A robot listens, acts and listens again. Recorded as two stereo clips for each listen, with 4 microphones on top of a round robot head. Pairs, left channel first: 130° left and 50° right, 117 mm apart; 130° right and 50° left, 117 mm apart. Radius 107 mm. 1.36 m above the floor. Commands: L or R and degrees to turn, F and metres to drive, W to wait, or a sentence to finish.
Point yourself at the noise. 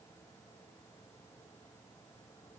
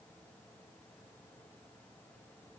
W
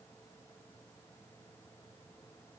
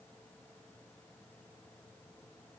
W
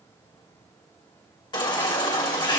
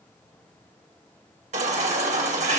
L75
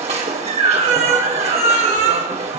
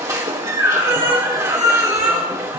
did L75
R15
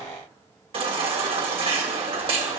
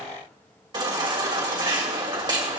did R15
Found it: a baby crying, straight ahead.